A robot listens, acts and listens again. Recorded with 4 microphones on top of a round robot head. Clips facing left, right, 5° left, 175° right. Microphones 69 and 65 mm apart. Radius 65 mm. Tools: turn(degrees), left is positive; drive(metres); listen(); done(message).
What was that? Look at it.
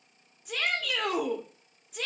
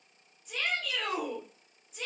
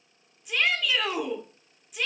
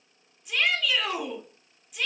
turn(degrees=90)
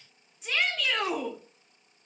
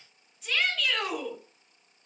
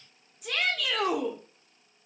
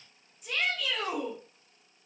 turn(degrees=20)
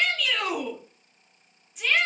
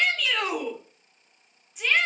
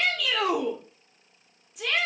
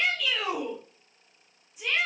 done("Found it: a shout, straight ahead, 1 to 2 m away.")